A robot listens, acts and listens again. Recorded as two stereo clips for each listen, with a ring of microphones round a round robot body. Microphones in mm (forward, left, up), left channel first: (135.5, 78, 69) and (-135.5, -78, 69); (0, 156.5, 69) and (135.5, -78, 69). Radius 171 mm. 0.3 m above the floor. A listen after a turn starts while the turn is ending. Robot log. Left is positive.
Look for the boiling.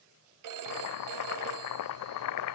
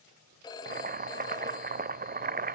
end: Found it: boiling, straight ahead.